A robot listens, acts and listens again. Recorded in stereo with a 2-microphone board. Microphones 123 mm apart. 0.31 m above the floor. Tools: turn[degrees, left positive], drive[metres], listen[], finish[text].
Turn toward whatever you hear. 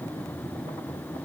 Action: listen[]
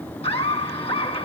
Thought: The laughter: about 50° left or 130° left.
Action: turn[50]
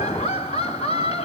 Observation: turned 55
Thought: So it is at 60° left.
Action: turn[60]
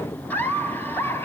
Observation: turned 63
Thought: The laughter is now 20° left.
Action: turn[20]
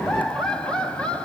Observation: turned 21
Thought: The laughter is now 10° left.
Action: turn[10]
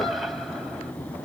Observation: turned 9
Action: finish[Found it: laughter, straight ahead, 2 to 4 m away.]